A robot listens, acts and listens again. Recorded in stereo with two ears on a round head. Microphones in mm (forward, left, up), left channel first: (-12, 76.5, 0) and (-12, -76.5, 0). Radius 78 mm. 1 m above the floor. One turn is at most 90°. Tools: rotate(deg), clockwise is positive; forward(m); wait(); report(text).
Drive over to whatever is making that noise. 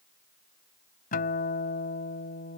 rotate(-55)
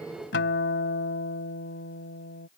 rotate(-65)
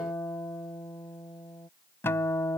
rotate(-15)
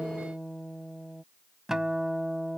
forward(1.0)
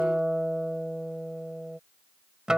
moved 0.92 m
forward(1.0)
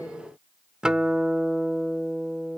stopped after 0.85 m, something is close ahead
report("Arrived at the guitar, straight ahead.")